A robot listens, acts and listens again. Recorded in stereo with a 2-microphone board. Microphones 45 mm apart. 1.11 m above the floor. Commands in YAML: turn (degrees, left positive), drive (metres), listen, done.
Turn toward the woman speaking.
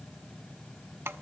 listen: true
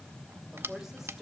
turn: -30
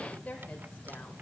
turn: 30
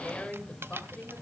turn: 20
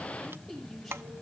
done: "Facing the woman speaking, over 4 m away."